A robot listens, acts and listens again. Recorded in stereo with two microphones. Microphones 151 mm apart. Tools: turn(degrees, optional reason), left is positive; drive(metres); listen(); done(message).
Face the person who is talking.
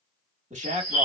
turn(degrees=-50, reason="The man speaking: about 50° right or 130° right.")
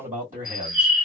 turn(degrees=-70, reason="So it is at 70° right.")
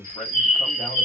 done("Facing the man speaking.")